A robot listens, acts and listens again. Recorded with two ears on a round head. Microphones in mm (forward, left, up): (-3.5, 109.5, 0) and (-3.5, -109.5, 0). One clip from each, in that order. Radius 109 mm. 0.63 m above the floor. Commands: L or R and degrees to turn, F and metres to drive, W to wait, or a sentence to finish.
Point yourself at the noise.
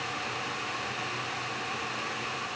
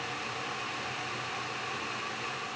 W
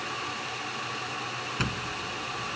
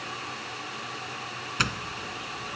R50
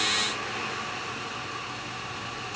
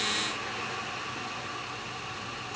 W
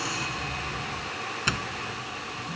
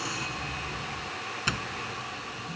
Facing the doorbell.